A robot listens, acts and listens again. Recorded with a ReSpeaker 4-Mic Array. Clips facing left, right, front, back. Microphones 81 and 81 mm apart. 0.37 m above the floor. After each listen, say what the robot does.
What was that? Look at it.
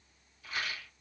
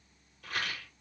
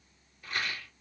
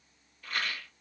Turn 75° right.
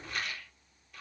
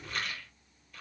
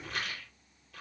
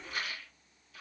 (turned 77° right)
Facing the rattle.